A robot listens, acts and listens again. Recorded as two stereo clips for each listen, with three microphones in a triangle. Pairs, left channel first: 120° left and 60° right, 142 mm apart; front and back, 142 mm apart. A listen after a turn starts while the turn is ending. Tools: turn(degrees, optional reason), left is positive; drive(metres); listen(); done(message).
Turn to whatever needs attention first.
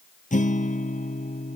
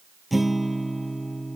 listen()
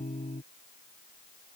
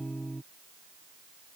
listen()
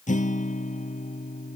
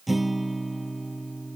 done("I can't make out anything urgent, only a guitar.")